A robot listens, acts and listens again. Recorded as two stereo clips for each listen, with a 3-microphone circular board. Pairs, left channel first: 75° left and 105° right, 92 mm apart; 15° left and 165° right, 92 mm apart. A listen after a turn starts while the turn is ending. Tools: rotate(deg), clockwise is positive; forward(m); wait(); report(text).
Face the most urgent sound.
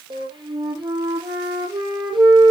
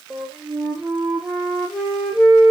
wait()
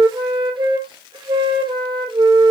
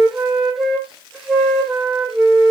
wait()
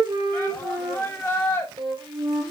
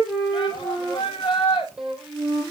report("Facing the shout.")